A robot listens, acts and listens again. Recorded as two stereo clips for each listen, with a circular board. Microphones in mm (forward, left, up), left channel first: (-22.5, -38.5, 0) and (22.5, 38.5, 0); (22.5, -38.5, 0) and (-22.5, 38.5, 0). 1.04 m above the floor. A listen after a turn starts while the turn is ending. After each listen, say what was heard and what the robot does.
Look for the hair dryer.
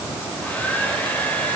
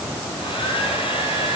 The hair dryer: 45° right. Turn 45° right.
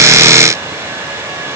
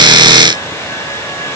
Found it: a hair dryer, straight ahead.